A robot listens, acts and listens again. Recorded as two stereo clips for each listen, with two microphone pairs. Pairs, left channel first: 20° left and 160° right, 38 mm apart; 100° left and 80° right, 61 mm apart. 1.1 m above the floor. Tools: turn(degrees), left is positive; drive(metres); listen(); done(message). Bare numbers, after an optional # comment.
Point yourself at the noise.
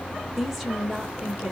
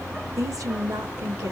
# The woman speaking: 80° right.
turn(-80)
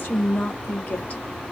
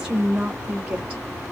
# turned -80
# The woman speaking is now 10° right.
turn(-10)
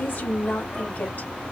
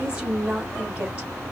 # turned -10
done("Facing the woman speaking, 2 to 4 m away.")